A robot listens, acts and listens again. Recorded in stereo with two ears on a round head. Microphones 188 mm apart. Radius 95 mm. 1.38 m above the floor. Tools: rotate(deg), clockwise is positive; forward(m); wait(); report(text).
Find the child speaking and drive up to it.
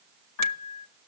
wait()
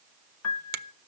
wait()
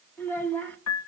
rotate(-30)
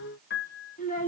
rotate(-140)
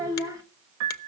rotate(15)
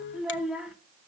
forward(1.0)
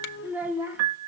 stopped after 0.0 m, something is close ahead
rotate(10)
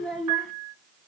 report("Blocked. The child speaking is further on, straight ahead.")